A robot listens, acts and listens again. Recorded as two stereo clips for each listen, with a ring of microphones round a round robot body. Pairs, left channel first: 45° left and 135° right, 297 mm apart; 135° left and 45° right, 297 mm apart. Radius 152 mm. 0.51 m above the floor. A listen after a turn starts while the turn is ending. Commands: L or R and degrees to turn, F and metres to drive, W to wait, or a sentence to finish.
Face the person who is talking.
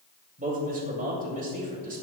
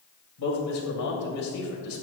L165
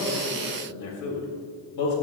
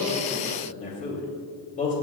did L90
L70
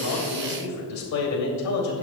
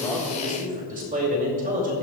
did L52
L20
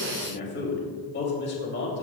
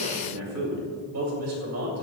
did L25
R10
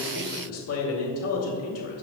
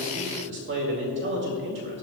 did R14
Found it: a man speaking, straight ahead.